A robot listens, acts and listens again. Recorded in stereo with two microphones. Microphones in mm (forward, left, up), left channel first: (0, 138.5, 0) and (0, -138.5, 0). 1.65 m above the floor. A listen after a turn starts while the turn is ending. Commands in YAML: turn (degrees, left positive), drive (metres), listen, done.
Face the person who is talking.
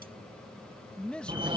turn: 30
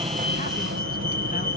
listen: true
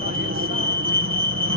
listen: true
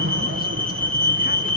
done: "I heard a man speaking, but can't make it out now. It was about 25° right or 145° left."